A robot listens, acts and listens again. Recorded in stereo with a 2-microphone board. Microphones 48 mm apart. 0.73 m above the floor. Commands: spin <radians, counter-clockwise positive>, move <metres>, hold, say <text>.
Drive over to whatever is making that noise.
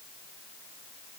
hold
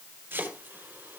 spin -0.79
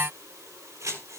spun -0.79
spin -1.57
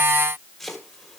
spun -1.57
move 1.0
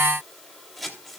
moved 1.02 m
move 1.0
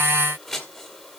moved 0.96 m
move 1.0
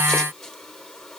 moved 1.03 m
hold
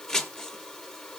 spin 0.17
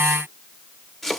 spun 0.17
move 1.0
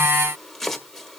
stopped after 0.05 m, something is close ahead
say Arrived at the chopping, straight ahead.